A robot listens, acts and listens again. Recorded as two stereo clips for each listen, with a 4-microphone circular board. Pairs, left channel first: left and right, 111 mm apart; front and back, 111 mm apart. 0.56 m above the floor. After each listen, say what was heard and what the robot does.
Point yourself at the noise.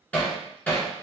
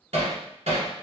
The hammering: 165° left. Turn 165° left.
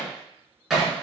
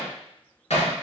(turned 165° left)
Facing the hammering, 1 to 2 m away.